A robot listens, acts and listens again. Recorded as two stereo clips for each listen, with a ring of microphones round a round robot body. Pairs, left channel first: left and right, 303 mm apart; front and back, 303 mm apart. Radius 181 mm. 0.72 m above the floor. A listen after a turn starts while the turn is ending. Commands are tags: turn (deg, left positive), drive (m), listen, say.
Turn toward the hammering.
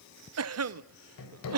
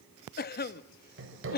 <turn deg="130"/>
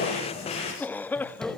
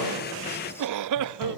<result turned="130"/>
<listen/>
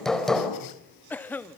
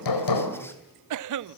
<say>Facing the hammering, over 4 m away.</say>